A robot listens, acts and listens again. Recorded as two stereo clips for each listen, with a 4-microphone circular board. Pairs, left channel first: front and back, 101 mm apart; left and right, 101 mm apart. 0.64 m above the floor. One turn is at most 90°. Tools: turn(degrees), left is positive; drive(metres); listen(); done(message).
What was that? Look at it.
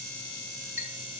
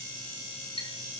turn(degrees=90)
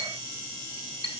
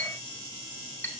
turn(degrees=15)
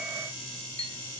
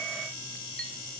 done("Facing the clink, 2 to 4 m away.")